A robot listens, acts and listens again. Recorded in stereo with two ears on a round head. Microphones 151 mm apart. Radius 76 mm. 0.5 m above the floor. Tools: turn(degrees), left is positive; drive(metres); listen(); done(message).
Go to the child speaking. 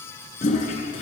listen()
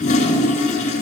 listen()
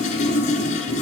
done("I can't make out a child speaking, only a toilet flushing.")